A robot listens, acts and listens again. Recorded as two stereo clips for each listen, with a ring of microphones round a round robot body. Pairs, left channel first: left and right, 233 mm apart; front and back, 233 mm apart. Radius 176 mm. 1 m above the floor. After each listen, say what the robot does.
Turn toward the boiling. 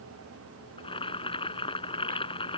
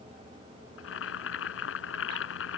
Turn 25° left.
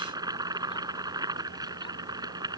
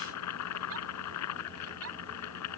Turn 20° right.
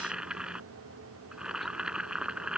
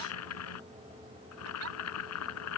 Facing the boiling.